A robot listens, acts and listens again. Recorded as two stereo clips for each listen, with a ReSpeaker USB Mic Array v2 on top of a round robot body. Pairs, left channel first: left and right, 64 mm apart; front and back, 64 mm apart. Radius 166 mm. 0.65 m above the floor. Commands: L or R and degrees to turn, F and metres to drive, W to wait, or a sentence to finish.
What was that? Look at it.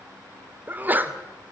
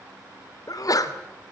R25
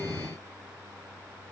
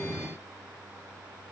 I heard a sneeze from this way, but can't make it out now.